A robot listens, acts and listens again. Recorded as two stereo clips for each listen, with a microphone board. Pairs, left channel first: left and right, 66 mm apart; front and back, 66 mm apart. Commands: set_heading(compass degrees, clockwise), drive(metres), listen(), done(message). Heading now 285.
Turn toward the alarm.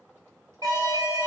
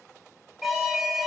set_heading(25)
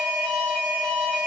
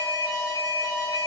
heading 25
set_heading(10)
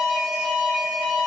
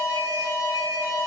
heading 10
done("Facing the alarm, over 4 m away.")